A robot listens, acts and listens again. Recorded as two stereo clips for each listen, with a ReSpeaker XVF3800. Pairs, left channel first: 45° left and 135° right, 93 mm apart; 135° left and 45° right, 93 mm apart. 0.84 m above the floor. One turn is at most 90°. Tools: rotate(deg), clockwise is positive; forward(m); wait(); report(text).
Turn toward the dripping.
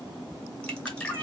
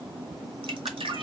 rotate(35)
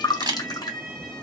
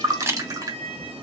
report("Facing the dripping.")